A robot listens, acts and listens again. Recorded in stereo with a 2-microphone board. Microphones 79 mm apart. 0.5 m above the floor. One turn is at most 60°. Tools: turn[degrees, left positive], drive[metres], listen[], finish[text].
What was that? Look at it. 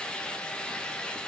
Action: listen[]
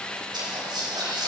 Thought: The whispering: about 60° right or 120° right.
Action: turn[-60]
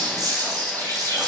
Thought: So it is at 55° right.
Action: turn[-55]
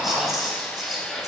Action: finish[Facing the whispering, 2 to 4 m away.]